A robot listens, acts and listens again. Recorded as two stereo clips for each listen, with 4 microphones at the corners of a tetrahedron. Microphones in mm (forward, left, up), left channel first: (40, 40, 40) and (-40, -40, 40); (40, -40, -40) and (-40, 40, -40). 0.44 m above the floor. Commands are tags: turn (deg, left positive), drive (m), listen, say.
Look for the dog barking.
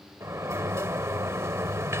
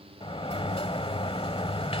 <listen/>
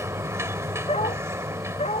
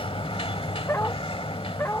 <turn deg="25"/>
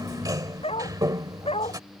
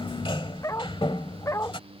<turn deg="15"/>
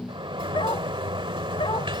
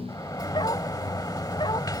<listen/>
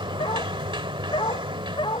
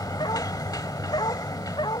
<say>Found it: a dog barking, straight ahead.</say>